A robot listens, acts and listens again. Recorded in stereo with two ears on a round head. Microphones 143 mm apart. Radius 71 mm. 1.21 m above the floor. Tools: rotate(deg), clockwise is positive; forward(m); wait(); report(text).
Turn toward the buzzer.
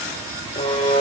rotate(-35)
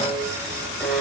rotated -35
report("Found it: a buzzer, straight ahead, over 4 m away.")